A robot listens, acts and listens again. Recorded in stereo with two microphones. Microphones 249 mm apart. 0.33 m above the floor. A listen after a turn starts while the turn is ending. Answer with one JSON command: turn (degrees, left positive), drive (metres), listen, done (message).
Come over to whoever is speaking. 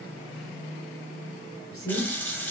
{"turn": 60}
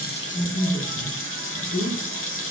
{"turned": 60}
{"turn": 10}
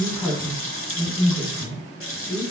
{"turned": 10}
{"drive": 1.0}
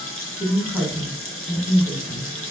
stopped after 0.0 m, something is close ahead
{"done": "Something is in my way. I am facing the woman speaking but have not reached it."}